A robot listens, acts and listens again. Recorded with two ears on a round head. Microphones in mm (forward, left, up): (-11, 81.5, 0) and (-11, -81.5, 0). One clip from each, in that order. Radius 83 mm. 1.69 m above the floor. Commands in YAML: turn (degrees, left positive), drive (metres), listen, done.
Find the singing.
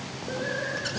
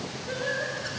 turn: -90
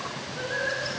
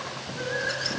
done: "Facing the singing."